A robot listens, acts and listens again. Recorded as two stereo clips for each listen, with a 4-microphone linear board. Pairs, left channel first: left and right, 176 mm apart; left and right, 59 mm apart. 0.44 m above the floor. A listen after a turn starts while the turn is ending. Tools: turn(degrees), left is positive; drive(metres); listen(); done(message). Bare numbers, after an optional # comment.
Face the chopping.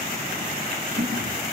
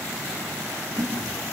listen()
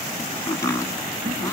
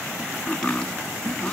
# The chopping: about 15° left or 165° left.
turn(15)
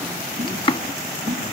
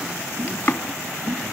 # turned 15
# So it is at 150° left.
turn(150)
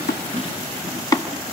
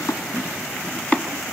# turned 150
# The chopping is now 25° left.
turn(25)
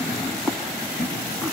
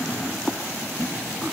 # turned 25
done("Facing the chopping.")